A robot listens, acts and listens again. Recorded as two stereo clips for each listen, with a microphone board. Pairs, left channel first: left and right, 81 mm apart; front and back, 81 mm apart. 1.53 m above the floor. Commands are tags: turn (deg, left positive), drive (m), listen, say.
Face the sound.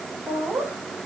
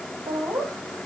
<turn deg="-155"/>
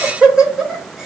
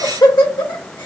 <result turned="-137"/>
<say>Found it: laughter, straight ahead.</say>